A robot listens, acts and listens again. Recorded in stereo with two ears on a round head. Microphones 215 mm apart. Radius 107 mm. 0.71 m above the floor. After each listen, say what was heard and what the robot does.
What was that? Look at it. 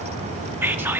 Turn 30° right.
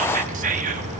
So it is at 140° right. Turn 140° right.
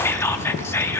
The whispering is now 10° left. Turn 10° left.
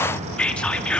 Facing the whispering, under 1 m away.